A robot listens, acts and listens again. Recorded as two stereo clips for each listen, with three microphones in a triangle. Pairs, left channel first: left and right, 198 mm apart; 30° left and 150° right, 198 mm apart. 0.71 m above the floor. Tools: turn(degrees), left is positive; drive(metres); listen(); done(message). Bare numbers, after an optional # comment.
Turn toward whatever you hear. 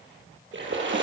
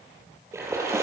# The splash: 75° right.
turn(-75)
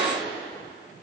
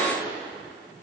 done("I heard a splash from this way, but can't make it out now.")